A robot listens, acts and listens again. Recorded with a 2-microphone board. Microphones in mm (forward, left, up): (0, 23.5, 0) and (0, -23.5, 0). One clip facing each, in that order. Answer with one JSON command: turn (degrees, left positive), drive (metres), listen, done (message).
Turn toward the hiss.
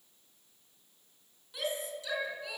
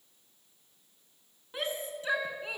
{"listen": true}
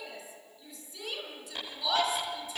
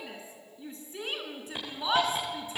{"turn": -20}
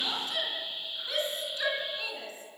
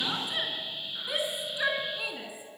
{"turn": -145}
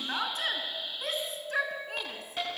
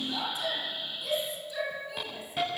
{"done": "Facing the hiss."}